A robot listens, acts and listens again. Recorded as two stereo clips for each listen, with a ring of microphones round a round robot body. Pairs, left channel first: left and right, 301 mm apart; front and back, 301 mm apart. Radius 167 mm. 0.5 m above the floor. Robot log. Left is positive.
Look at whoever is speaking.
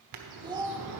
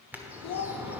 note: The child speaking: 15° right.
cmd yaw -15
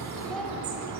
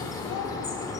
cmd idle
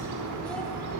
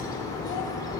cmd idle
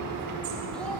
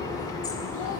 end: Facing where the child speaking came from. I can't hear it now.